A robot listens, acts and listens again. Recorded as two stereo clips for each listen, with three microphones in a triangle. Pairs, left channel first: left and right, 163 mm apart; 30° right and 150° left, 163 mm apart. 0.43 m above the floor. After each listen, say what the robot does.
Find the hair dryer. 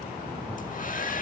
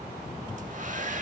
Turn 115° left.
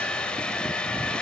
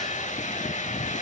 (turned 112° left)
Found it: a hair dryer, straight ahead.